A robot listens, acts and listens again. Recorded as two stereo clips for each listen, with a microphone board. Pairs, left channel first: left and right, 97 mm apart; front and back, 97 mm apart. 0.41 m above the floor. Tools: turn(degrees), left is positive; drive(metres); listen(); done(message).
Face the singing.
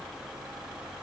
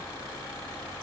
listen()
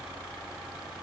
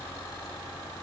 listen()
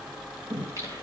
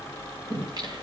turn(degrees=-140)
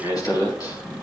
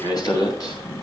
turn(degrees=45)
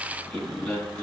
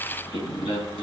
turn(degrees=10)
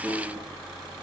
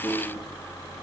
done("Found it: singing, straight ahead.")